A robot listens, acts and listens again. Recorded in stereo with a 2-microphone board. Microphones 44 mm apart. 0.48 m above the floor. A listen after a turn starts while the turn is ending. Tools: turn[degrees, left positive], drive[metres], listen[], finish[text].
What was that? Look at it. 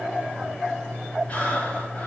Thought: The breathing: about 35° left or 145° left.
Action: turn[35]
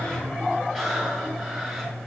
Action: finish[Found it: breathing, straight ahead.]